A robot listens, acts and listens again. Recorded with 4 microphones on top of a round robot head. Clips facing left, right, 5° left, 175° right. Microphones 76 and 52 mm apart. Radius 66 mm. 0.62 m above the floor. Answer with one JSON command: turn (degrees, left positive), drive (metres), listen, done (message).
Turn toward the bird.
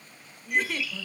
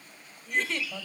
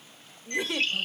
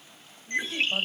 {"turn": 115}
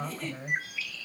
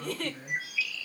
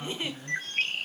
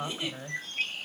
{"turn": 40}
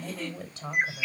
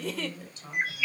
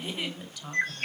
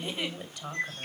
{"turn": 20}
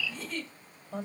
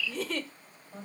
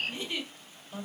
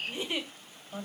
{"done": "Facing the bird."}